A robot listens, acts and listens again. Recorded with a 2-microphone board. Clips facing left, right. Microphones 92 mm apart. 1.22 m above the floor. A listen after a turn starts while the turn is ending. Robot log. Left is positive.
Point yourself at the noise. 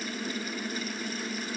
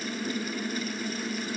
cmd idle
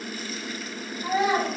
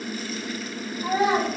note: The child speaking: about 40° right or 140° right.
cmd yaw -40
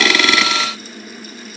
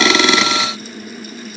cmd idle
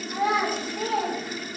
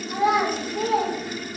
note: So it is at 100° right.
cmd yaw -100
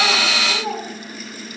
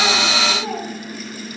end: Facing the child speaking, 1 to 2 m away.